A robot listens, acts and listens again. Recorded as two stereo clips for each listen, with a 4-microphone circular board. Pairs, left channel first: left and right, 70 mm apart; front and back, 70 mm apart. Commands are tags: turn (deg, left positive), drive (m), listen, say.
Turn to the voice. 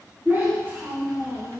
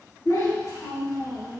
<turn deg="-35"/>
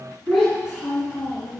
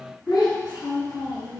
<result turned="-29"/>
<turn deg="-10"/>
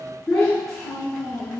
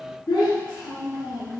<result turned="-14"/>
<say>Found it: a child speaking, straight ahead.</say>